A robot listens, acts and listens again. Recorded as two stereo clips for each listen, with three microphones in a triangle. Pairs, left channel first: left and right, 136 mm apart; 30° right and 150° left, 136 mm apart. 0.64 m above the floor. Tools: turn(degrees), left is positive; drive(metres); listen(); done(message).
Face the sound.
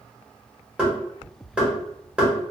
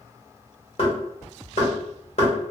turn(degrees=-10)
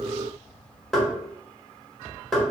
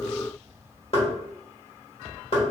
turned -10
done("Facing the knocking.")